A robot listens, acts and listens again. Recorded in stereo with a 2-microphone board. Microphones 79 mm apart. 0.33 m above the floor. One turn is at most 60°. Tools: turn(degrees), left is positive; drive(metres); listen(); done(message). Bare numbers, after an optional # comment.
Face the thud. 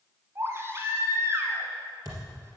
# The thud: about 50° right or 130° right.
turn(-50)
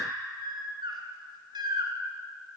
listen()
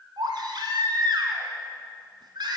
done("I heard a thud, but can't make it out now. It was about straight ahead or 80° right.")